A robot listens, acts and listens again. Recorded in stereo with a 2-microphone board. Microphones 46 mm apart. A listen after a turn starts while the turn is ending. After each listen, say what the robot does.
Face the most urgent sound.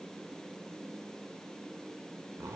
Keep listening.
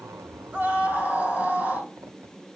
Turn 35° right.
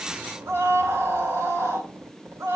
Turn 110° right.
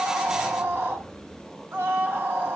Turn 50° right.
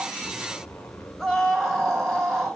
Found it: a scream, straight ahead.